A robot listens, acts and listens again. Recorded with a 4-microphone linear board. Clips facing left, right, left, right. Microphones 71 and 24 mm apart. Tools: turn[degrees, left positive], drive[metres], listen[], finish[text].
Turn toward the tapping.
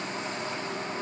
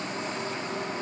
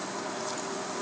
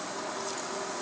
Action: listen[]
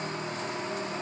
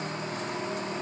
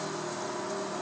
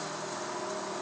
Action: listen[]
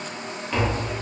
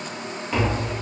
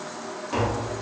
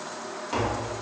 Action: turn[-30]
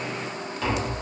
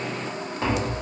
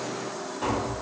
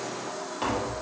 Thought: So it is at 145° right.
Action: turn[-145]
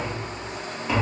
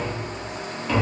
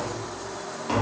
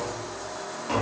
Thought: The tapping is now 10° left.
Action: turn[10]
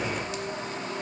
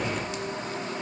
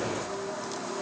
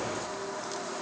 Action: listen[]
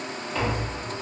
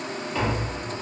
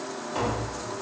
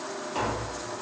Action: finish[Facing the tapping.]